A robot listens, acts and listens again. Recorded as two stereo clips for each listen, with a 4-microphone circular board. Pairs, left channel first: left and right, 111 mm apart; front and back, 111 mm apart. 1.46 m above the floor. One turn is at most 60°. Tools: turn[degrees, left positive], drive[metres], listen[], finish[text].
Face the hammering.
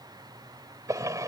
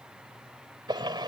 Action: listen[]
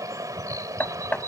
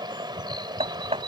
Thought: The hammering: 165° left.
Action: turn[60]
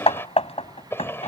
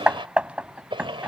Thought: The hammering is now 105° left.
Action: turn[60]
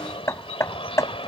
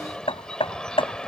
Thought: The hammering is now 30° left.
Action: turn[30]
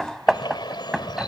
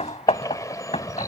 Action: finish[Found it: hammering, straight ahead.]